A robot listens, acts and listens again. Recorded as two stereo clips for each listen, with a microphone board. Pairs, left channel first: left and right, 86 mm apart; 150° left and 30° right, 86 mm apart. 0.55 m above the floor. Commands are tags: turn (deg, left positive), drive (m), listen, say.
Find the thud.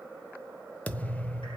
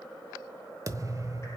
<turn deg="20"/>
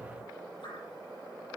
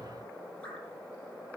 <say>Found it: a thud, straight ahead.</say>